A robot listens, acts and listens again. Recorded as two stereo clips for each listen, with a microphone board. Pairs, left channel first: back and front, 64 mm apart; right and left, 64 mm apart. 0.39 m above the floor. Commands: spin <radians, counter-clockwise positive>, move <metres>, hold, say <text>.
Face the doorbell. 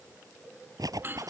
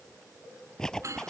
spin 0.96
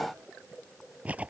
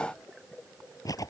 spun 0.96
hold
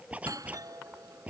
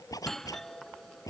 say Found it: a doorbell, straight ahead.